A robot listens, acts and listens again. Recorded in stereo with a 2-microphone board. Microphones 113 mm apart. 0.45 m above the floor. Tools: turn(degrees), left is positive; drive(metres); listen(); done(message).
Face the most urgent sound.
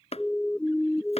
turn(degrees=30)
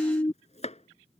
turn(degrees=140)
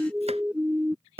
turn(degrees=-10)
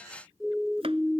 done("Facing the siren.")